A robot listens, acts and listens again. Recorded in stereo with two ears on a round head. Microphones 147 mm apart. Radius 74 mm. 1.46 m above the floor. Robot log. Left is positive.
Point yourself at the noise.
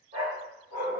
note: The dog barking: about 60° right or 120° right.
cmd yaw -60
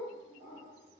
note: So it is at 15° right.
cmd yaw -15
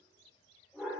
end: Facing the dog barking.